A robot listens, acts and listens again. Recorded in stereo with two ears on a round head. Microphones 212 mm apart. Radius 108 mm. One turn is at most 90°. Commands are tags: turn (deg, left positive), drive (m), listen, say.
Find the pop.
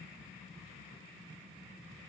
<listen/>
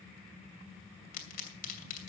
<turn deg="40"/>
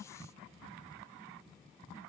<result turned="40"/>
<listen/>
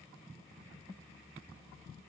<say>I heard a pop, but can't make it out now. It was about straight ahead or 100° left.</say>